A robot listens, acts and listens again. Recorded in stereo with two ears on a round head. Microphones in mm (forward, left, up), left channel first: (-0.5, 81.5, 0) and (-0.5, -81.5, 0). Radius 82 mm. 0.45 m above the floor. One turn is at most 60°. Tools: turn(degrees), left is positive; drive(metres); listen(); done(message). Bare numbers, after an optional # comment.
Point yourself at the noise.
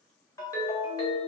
# The ringtone: about 20° left or 160° left.
turn(20)
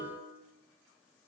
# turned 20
done("Facing the ringtone.")